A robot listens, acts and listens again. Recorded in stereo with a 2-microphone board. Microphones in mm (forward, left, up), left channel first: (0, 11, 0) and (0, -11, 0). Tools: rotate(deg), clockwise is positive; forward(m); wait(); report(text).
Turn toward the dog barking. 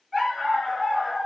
rotate(20)
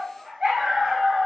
rotate(140)
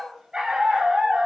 rotate(50)
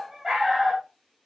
report("Facing the dog barking.")